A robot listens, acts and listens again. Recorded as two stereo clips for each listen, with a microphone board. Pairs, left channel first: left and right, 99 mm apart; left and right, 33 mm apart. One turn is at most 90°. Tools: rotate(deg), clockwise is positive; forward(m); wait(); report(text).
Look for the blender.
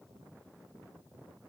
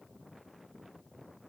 wait()
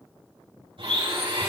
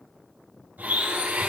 rotate(90)
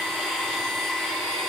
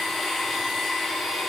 rotate(-10)
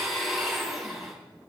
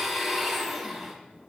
report("Found it: a blender, straight ahead, 2 to 4 m away.")